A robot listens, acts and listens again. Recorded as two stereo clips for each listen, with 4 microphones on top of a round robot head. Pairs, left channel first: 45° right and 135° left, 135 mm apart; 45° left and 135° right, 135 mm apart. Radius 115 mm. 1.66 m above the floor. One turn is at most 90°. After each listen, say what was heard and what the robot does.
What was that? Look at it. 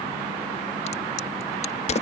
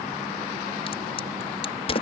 Facing the crack.